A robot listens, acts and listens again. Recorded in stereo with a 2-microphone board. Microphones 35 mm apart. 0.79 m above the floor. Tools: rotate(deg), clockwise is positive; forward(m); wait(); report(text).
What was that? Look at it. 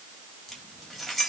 rotate(-30)
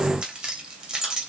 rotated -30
rotate(20)
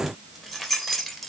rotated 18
report("Found it: keys jangling, straight ahead, 2 to 4 m away.")